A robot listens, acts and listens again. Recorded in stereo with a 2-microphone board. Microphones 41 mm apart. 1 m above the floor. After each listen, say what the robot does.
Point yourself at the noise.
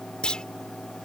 Turn 20° left.
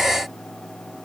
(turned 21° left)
Keep listening.
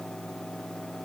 I heard a clunk, but can't make it out now. It was about straight ahead or 140° left.